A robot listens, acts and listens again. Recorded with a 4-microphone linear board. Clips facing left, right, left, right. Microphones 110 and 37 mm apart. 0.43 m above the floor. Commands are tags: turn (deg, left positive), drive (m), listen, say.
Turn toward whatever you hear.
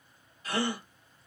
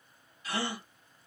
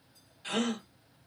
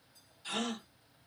<turn deg="45"/>
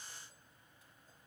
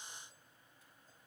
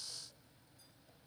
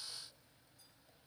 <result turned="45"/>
<listen/>
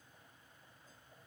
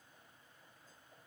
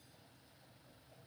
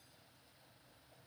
<say>I heard a gasp, but can't make it out now. It was about straight ahead or 90° left.</say>